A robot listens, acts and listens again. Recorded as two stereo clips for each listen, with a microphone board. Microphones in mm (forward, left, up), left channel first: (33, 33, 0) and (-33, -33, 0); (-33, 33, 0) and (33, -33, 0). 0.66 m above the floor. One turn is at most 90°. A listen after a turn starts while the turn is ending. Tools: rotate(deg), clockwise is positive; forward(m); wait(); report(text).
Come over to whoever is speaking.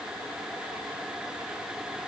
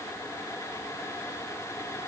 wait()
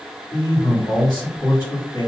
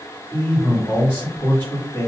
rotate(-75)
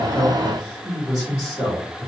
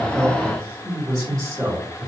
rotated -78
forward(1.0)
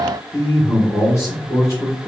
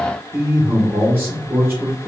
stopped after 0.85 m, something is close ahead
report("I am next to the man speaking.")